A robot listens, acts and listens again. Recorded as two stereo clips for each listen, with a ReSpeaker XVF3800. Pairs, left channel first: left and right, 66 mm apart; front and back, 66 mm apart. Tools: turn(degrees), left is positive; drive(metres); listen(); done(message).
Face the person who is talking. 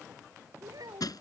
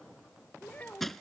turn(degrees=-65)
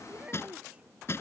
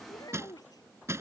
turn(degrees=-20)
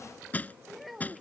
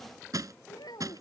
done("Facing the child speaking.")